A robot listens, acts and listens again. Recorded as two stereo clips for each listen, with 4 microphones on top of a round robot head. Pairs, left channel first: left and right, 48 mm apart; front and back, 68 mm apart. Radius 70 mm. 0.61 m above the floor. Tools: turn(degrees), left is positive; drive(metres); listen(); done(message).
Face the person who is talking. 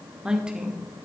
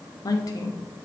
turn(degrees=-15)
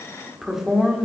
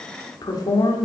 done("Facing the woman speaking.")